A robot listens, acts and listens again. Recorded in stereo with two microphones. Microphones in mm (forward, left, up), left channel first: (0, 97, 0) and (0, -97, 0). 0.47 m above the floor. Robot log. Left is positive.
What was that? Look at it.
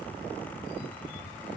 cmd idle
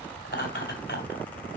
note: The laughter: about 70° left or 110° left.
cmd yaw +70
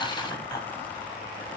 note: So it is at 20° left.
cmd yaw +20
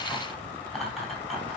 end: Found it: laughter, straight ahead.